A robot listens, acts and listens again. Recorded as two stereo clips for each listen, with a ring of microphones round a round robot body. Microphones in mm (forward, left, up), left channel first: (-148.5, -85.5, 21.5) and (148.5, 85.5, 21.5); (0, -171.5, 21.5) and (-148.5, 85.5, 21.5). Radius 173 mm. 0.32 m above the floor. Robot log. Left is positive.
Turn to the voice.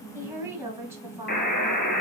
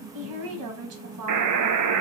note: The woman speaking: 110° left.
cmd yaw +110
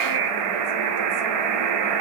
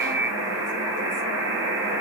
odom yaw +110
cmd idle
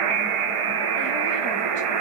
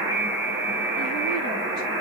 cmd idle
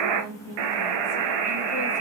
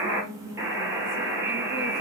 end: I heard a woman speaking from this way, but can't make it out now.